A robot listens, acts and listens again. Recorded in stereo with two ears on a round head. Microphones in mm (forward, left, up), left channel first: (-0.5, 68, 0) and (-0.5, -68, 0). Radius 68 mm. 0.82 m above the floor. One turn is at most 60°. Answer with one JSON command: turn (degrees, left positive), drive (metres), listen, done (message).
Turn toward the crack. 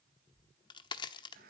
{"turn": 30}
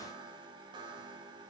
{"listen": true}
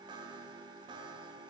{"done": "I heard a crack, but can't make it out now. It was about straight ahead or 120° left."}